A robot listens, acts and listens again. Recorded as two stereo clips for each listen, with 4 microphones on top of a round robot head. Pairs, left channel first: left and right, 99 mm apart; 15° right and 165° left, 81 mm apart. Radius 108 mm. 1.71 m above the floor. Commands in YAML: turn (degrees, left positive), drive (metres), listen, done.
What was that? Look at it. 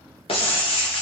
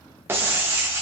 turn: 110
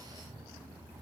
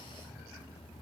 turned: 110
done: "I heard breaking glass from this way, but can't make it out now."